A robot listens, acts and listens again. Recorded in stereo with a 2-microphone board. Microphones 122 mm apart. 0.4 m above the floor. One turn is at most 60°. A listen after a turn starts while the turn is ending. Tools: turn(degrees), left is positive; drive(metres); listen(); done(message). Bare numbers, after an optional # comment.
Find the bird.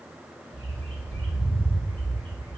# The bird: about 55° right or 125° right.
turn(-55)
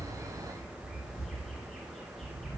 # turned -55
done("Found it: a bird, straight ahead, under 1 m away.")